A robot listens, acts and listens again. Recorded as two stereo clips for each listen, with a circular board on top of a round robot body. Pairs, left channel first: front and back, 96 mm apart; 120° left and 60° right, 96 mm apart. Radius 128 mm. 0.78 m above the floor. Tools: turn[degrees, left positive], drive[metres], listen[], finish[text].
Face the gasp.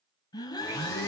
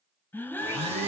Thought: The gasp: 50° left.
Action: turn[50]
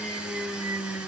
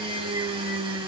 Action: finish[Facing where the gasp came from. I can't hear it now.]